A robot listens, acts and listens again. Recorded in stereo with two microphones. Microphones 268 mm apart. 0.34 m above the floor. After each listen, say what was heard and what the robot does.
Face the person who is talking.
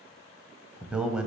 Turn 30° right.
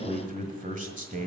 So it is at 145° right. Turn 145° right.
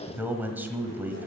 The man speaking is now 10° right. Turn 10° right.
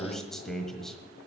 Facing the man speaking, 1 to 2 m away.